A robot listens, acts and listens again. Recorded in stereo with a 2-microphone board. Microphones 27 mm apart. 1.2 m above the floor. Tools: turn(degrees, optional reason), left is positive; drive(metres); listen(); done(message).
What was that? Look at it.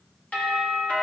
turn(degrees=65, reason="The doorbell: about 65° left or 115° left.")
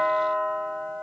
turn(degrees=40, reason="So it is at 40° left.")
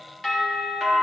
done("Found it: a doorbell, straight ahead, 2 to 4 m away.")